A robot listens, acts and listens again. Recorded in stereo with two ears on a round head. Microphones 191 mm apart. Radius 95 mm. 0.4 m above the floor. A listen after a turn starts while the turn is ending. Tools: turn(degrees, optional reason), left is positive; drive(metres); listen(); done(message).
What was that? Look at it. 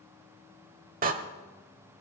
turn(degrees=-40, reason="The door slam: about 40° right or 140° right.")
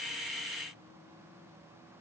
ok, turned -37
listen()
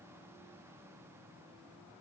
done("I heard a door slam, but can't make it out now. It was about straight ahead or 105° right.")